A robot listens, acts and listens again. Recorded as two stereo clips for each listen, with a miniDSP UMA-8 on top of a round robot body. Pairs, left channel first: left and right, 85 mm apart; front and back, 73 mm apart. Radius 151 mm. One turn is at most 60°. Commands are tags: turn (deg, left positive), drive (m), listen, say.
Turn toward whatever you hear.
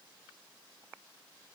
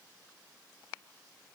<listen/>
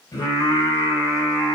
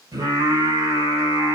<turn deg="60"/>
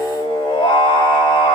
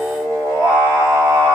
<turn deg="60"/>
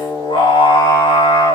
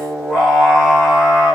<turn deg="60"/>
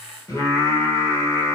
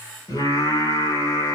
<turn deg="35"/>
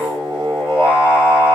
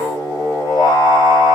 <turn deg="-15"/>
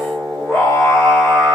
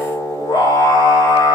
<say>Found it: singing, straight ahead.</say>